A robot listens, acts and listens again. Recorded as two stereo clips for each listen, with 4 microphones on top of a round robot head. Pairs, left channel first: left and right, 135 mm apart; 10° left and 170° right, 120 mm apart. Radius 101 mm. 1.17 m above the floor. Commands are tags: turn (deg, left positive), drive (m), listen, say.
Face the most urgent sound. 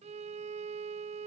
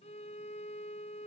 <listen/>
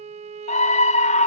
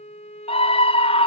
<turn deg="50"/>
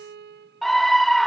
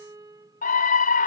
<say>Found it: a scream, straight ahead.</say>